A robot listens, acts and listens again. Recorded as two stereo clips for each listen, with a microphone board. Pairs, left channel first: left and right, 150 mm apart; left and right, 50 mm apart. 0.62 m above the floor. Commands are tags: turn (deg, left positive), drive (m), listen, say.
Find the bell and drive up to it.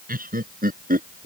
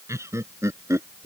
<listen/>
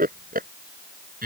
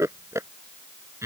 <listen/>
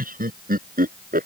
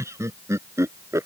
<say>I can't make out a bell, only laughter.</say>